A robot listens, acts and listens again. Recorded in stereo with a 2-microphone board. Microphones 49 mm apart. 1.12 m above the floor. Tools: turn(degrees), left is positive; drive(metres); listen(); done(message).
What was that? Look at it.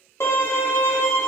turn(degrees=60)
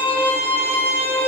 turn(degrees=35)
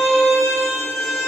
turn(degrees=10)
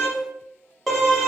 done("Facing the violin.")